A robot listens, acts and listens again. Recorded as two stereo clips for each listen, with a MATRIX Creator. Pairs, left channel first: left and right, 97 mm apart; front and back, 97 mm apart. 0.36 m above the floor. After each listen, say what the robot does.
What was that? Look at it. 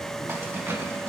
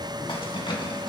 Turn 25° right.
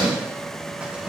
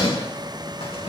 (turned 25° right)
Turn 10° right.
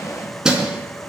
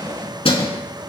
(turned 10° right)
Turn 10° right.
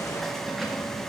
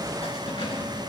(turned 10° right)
Keep listening.
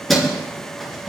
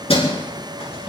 Found it: keys jangling, straight ahead.